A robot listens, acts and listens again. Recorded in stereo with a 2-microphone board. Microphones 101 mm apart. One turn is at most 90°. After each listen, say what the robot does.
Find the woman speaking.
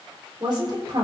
Turn 50° right.
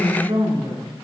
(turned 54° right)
Turn 70° right.
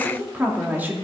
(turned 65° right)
Turn 20° right.
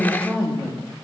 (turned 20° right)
Found it: a woman speaking, straight ahead.